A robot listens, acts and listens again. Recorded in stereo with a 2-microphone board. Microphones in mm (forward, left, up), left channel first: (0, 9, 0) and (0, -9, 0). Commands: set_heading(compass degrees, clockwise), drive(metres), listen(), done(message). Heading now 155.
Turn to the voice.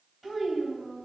set_heading(125)
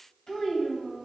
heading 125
set_heading(340)
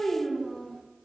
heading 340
set_heading(295)
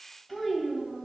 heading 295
done("Found it: a child speaking, straight ahead.")